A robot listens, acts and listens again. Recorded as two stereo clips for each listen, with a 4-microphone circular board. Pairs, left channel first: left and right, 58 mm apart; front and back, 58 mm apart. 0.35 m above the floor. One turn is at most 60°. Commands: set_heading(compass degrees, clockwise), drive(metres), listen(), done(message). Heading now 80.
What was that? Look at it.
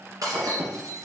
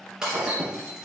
set_heading(140)
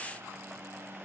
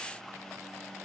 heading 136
set_heading(181)
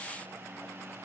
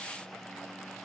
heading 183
done("I heard breaking glass from this way, but can't make it out now.")